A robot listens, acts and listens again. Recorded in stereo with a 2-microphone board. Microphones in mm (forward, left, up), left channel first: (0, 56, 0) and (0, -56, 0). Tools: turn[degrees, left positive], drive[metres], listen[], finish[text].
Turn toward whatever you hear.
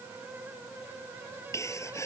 Thought: The sneeze: about 25° left or 155° left.
Action: turn[25]
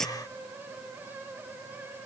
Action: finish[Found it: a sneeze, straight ahead.]